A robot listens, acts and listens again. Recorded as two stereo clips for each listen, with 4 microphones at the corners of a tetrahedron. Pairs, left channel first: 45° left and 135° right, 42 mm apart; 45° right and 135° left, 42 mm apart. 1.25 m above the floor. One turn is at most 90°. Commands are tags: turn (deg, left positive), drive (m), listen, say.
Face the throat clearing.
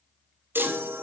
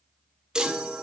<listen/>
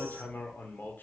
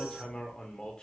<listen/>
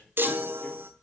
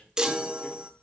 <say>I can't make out throat clearing, only a chime and hammering.</say>